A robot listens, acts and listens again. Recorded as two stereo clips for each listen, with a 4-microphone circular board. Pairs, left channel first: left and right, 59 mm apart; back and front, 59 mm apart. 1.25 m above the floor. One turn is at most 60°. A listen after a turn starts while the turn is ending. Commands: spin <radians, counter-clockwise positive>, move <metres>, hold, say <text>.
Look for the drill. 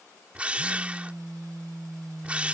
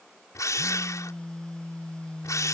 spin -1.05
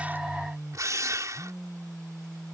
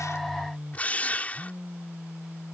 spin -1.05
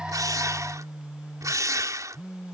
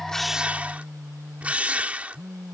spin -1.05
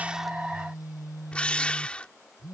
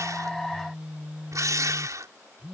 spin 0.35
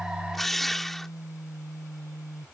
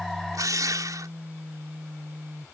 say Found it: a drill, straight ahead.